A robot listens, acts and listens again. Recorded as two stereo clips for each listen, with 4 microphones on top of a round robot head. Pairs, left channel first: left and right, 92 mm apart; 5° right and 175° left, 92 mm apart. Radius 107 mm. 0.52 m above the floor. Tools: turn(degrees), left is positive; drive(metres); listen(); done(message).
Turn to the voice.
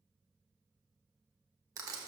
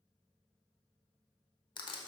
listen()
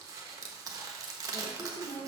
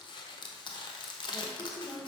turn(degrees=70)
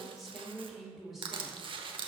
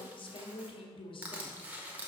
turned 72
done("Found it: a woman speaking, straight ahead, 1 to 2 m away.")